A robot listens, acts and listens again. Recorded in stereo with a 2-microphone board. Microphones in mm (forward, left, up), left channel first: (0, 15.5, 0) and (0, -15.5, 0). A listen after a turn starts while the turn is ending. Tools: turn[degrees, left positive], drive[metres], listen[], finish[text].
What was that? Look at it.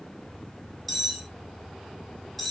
Action: turn[30]
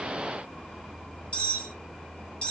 Thought: So it is at 140° left.
Action: turn[140]
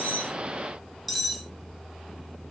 Action: finish[Found it: cutlery clinking, straight ahead.]